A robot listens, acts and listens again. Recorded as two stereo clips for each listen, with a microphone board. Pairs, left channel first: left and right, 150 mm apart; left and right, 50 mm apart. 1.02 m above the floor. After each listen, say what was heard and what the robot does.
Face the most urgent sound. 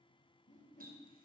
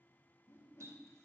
Keep listening.
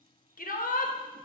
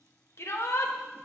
The shout: about 70° left or 110° left. Turn 70° left.
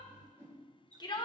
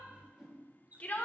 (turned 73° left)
So it is at 30° left. Turn 30° left.
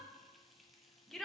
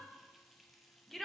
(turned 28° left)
Facing the shout.